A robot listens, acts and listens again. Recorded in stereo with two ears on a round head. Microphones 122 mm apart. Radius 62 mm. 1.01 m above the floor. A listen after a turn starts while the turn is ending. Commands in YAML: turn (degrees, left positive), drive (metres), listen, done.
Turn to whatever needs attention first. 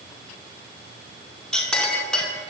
listen: true
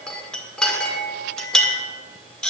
listen: true
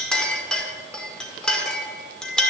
done: "I can't make out anything urgent to turn to."